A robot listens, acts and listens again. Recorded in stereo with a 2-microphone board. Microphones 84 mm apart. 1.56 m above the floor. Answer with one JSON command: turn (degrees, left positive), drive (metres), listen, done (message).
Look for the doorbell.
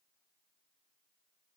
{"listen": true}
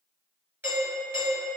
{"turn": -20}
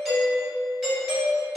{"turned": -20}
{"done": "Facing the doorbell, 1 to 2 m away."}